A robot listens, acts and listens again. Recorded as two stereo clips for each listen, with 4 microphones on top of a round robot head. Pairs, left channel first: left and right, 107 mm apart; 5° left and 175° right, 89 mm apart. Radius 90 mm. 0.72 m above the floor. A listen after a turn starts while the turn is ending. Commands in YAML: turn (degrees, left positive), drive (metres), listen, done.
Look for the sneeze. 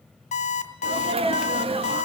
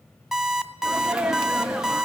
turn: -95
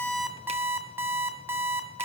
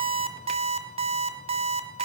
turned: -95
done: "Facing where the sneeze came from. I can't hear it now."